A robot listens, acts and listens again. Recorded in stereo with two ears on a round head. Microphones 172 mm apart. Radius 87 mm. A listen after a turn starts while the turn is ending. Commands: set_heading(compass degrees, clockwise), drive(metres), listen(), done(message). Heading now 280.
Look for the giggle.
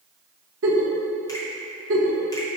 set_heading(350)
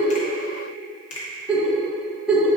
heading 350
done("Facing the giggle, 1 to 2 m away.")